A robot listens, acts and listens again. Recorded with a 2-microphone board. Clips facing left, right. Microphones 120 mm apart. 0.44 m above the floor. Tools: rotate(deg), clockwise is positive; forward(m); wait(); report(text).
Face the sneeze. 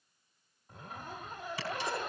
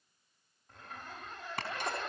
rotate(55)
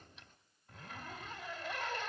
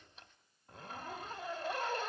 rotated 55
wait()
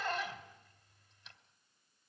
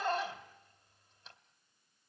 report("I heard a sneeze, but can't make it out now. It was about straight ahead or 70° right.")